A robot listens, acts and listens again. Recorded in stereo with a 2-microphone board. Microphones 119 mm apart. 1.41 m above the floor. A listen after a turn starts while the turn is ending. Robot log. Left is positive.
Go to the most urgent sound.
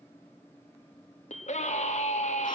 cmd yaw +90
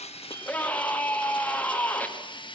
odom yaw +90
note: So it is at 15° left.
cmd yaw +15
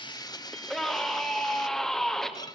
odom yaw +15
cmd fwd 1.0
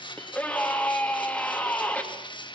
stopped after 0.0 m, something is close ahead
note: The scream is now 10° left.
cmd yaw +10
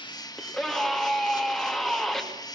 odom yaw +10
end: Something is in my way. I am facing the scream but have not reached it.